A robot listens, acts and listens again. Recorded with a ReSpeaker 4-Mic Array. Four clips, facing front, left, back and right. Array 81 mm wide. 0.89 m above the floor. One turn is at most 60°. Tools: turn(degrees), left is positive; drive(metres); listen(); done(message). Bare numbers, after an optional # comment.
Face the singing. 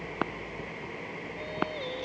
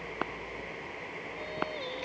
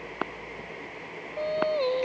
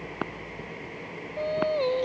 # The singing: 135° right.
turn(-60)
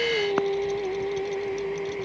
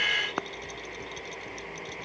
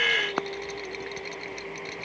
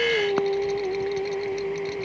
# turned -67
# The singing is now 55° right.
turn(-55)
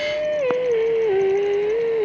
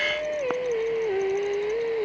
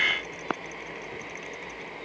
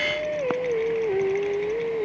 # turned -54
# The singing is now 10° left.
turn(10)
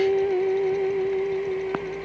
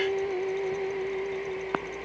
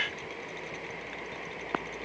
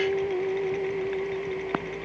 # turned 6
done("Found it: singing, straight ahead.")